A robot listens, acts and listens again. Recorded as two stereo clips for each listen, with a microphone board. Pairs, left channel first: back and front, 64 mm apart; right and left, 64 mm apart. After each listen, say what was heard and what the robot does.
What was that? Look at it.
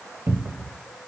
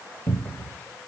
The cupboard door: 40° right. Turn 40° right.
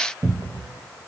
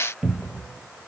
The cupboard door is now 10° left. Turn 10° left.
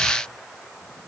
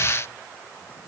Keep listening.
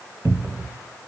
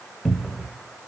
Facing the cupboard door.